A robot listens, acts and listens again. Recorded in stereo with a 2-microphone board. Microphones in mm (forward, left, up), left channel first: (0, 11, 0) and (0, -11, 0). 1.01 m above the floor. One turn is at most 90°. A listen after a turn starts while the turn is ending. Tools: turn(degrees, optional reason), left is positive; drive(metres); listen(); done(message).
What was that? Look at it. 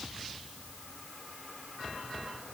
listen()
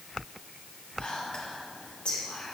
turn(degrees=70, reason="The whispering: about 70° left or 110° left.")
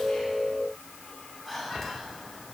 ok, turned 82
turn(degrees=15, reason="So it is at 15° left.")
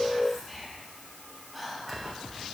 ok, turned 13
done("Found it: whispering, straight ahead, 2 to 4 m away.")